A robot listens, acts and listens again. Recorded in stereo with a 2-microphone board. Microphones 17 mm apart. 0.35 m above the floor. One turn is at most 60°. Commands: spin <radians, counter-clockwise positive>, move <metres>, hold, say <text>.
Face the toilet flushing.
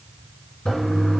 spin 1.05
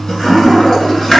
spin 0.70
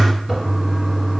say Found it: a toilet flushing, straight ahead, 2 to 4 m away.